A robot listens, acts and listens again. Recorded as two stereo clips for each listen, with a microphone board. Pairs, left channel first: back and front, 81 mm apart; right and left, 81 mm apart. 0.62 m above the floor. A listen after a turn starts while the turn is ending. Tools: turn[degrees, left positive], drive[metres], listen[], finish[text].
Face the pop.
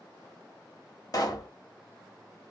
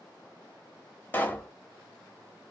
Thought: The pop: 150° right.
Action: turn[-150]
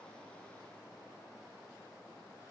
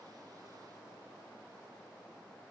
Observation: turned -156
Action: finish[Facing where the pop came from. I can't hear it now.]